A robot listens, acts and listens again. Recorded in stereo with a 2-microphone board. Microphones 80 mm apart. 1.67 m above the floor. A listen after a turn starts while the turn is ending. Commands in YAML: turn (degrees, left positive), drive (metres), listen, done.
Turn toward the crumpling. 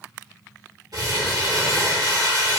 turn: -60
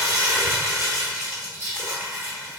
turn: -40
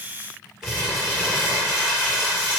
done: "Facing the crumpling."